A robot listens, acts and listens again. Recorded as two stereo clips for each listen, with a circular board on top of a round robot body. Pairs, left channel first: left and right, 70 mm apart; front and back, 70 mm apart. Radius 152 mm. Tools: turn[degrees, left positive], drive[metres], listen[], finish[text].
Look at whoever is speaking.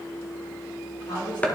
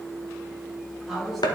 Thought: The woman speaking: 90° left.
Action: turn[90]
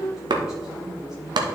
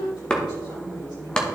Action: listen[]
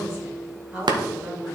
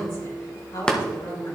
Thought: The woman speaking is now 15° right.
Action: turn[-15]
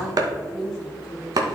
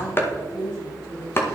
Action: finish[Facing the woman speaking, over 4 m away.]